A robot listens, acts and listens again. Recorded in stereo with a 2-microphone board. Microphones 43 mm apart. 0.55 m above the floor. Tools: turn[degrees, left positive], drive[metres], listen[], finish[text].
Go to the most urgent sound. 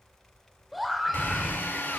Action: turn[-30]
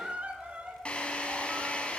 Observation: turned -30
Thought: So it is at 145° right.
Action: turn[-145]
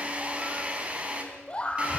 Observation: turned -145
Thought: The scream is now 30° left.
Action: turn[30]
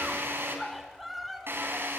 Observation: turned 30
Action: drive[1.0]
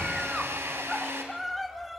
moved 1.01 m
Action: drive[1.0]
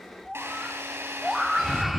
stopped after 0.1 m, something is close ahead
Action: finish[Arrived at the scream, straight ahead.]